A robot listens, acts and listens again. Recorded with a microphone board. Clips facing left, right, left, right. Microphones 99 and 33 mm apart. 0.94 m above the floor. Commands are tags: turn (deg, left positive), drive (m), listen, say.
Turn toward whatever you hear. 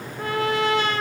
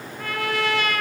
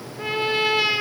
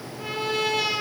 <turn deg="25"/>
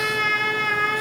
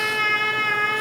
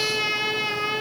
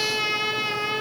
<say>Facing the trumpet, 2 to 4 m away.</say>